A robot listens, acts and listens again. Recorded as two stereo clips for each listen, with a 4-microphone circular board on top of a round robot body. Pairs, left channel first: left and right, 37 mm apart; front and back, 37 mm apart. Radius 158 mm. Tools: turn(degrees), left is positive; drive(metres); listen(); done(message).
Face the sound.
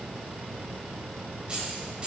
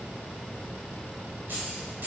turn(degrees=-150)
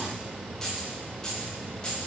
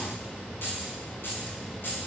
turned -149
turn(degrees=20)
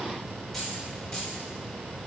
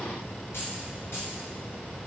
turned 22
turn(degrees=10)
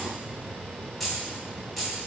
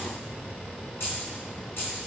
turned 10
done("Found it: keys jangling, straight ahead, 2 to 4 m away.")